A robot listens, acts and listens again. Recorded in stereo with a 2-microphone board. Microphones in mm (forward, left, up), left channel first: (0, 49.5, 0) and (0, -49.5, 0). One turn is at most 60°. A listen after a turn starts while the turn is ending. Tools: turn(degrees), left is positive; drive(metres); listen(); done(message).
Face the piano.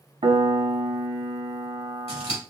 turn(degrees=-60)
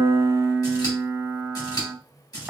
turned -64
turn(degrees=-15)
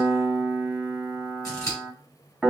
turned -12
done("Facing the piano.")